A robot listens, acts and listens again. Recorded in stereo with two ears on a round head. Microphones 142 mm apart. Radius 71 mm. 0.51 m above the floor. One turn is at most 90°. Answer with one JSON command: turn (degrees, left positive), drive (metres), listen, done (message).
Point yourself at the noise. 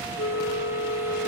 {"turn": 90}
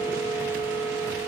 {"turn": 10}
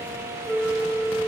{"done": "Facing the flute, 1 to 2 m away."}